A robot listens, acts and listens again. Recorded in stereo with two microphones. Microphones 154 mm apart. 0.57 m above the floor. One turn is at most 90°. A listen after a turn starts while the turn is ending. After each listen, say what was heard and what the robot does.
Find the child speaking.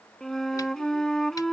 Keep listening.
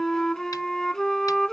Keep listening.
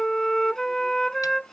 I can't make out a child speaking, only a flute.